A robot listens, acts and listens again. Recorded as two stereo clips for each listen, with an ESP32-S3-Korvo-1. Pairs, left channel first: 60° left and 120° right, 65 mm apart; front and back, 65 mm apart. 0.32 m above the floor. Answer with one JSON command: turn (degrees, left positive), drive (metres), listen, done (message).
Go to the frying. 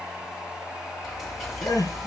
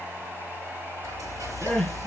{"turn": 150}
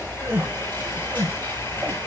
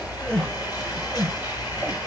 {"drive": 1.0}
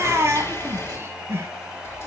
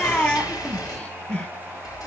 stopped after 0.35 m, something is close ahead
{"turn": 10}
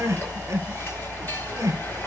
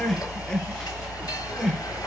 {"done": "Blocked. The frying is further on, straight ahead."}